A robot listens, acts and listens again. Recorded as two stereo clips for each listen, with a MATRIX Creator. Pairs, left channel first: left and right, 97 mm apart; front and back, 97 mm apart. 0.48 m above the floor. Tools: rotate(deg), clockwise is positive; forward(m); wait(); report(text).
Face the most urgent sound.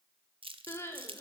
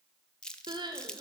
rotate(-150)
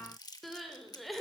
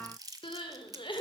report("Facing the crying.")